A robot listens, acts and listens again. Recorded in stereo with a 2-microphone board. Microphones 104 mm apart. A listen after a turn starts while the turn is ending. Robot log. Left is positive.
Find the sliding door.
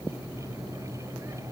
cmd idle
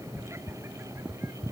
cmd idle
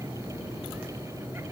end: I can't make out a sliding door to turn to.